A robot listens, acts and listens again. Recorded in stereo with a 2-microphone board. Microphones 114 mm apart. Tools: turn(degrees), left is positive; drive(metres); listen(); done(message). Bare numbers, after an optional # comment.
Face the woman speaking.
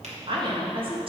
# The woman speaking: about 50° right or 130° right.
turn(-50)
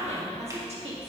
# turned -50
# So it is at 65° right.
turn(-65)
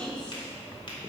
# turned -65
# The woman speaking is now 10° left.
turn(10)
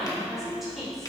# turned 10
done("Found it: a woman speaking, straight ahead, over 4 m away.")